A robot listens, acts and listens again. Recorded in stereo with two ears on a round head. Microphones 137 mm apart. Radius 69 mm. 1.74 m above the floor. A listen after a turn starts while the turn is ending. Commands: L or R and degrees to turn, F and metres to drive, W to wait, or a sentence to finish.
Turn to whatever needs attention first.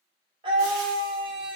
R30
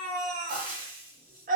R120
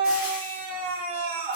R40
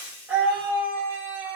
R10
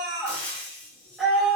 Found it: a scream, straight ahead, under 1 m away.